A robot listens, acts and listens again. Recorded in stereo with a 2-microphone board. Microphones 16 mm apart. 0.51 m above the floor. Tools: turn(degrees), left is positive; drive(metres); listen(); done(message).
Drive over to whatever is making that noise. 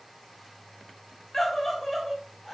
turn(degrees=30)
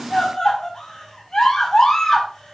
turn(degrees=140)
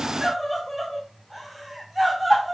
drive(metres=1.0)
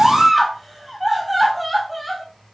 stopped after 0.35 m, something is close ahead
done("Blocked. The scream is further on, straight ahead.")